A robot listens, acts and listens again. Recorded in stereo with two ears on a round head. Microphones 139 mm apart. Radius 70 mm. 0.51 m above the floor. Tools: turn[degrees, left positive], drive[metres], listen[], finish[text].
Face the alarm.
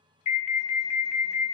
Thought: The alarm: about 50° left or 130° left.
Action: turn[50]
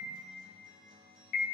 Thought: So it is at 75° left.
Action: turn[75]
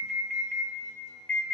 Action: finish[Found it: an alarm, straight ahead, under 1 m away.]